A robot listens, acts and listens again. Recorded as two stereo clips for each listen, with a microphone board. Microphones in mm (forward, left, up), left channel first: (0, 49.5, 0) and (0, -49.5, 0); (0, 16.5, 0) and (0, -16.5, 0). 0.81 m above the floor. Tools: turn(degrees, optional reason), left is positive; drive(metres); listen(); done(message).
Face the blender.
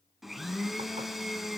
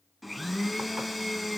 turn(degrees=30)
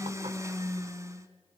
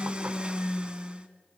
turn(degrees=-35, reason="So it is at 35° right.")
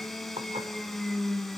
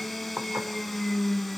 done("Found it: a blender, straight ahead, 1 to 2 m away.")